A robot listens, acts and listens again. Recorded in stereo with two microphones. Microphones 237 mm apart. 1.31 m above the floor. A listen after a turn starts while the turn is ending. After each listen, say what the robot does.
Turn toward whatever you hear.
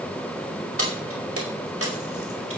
Turn 70° right.
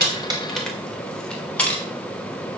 Facing the keys jangling.